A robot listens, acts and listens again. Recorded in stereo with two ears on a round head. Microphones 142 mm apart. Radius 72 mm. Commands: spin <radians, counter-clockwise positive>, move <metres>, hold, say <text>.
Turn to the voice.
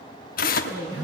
spin -0.61
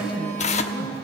hold
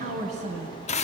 spin -2.09
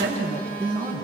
spin -0.35
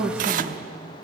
say Found it: a woman speaking, straight ahead, 2 to 4 m away.